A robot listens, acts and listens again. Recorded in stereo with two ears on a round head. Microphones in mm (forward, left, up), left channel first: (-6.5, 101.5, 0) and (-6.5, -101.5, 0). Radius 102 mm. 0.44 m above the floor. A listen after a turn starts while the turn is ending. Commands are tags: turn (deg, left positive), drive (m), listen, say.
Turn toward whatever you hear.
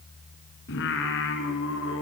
<turn deg="65"/>
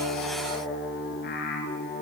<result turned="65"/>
<turn deg="45"/>
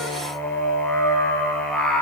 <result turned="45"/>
<say>Found it: singing, straight ahead, over 4 m away.</say>